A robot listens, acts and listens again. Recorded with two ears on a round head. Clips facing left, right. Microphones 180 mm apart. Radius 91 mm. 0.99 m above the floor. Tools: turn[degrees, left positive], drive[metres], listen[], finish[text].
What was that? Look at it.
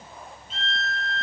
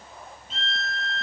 Action: turn[-90]
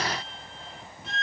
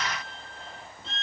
Thought: So it is at 10° left.
Action: turn[10]
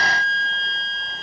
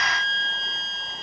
Action: finish[Facing the violin, 2 to 4 m away.]